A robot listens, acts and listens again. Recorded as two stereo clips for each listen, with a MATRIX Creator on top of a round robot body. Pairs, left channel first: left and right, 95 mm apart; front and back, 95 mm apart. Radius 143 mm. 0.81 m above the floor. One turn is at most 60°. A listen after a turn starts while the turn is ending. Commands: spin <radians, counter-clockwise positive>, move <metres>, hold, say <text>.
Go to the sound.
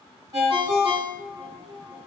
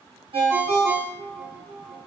spin -1.05
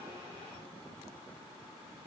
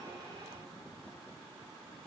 spin -1.05
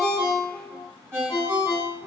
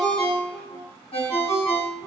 spin -0.44
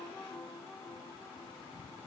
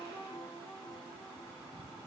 hold
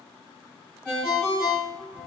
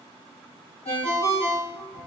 spin -0.17
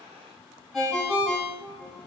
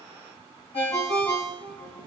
move 1.0
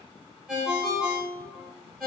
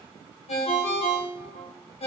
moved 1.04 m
move 1.0
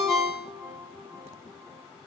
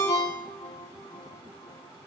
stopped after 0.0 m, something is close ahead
say Arrived at the ringtone, straight ahead.